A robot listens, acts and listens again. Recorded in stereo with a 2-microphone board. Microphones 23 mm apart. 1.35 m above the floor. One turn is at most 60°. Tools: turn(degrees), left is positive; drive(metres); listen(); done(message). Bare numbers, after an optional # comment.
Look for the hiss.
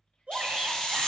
# The hiss: about 40° left or 140° left.
turn(40)
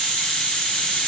# So it is at 95° left.
turn(60)
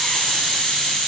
# The hiss is now 45° left.
turn(45)
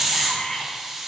# The hiss is now 10° right.
turn(-10)
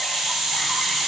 done("Facing the hiss.")